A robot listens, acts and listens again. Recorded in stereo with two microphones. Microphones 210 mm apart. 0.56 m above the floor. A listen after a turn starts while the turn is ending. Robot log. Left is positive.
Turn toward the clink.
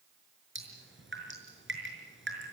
cmd idle
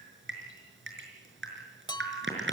note: The clink: about 20° left or 160° left.
cmd yaw +20
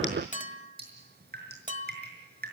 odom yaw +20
note: So it is at 140° left.
cmd yaw +140
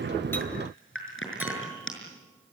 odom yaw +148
note: Nothing new. It was at 10° right.
cmd yaw -10
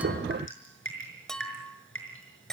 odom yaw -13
end: Found it: a clink, straight ahead.